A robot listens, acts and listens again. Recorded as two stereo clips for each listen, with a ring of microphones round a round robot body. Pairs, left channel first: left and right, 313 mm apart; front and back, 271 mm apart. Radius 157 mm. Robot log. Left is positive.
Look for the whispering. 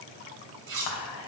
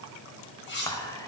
note: The whispering: 75° left.
cmd yaw +75
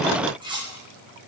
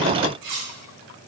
cmd idle
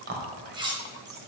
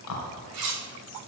note: The whispering is now 35° right.
cmd yaw -35
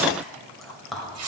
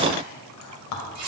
end: Found it: whispering, straight ahead, 2 to 4 m away.